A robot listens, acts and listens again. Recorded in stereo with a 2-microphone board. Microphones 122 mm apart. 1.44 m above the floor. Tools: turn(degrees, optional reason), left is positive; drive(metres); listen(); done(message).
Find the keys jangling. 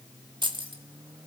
turn(degrees=-45, reason="The keys jangling: about 45° right or 135° right.")
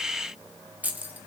turn(degrees=-15, reason="So it is at 15° right.")
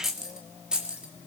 done("Facing the keys jangling, 2 to 4 m away.")